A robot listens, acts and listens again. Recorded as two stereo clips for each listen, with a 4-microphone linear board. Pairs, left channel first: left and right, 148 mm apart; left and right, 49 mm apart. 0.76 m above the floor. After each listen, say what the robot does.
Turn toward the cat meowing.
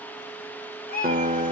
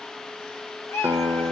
Turn 90° left.
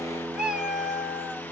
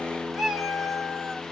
Found it: a cat meowing, straight ahead.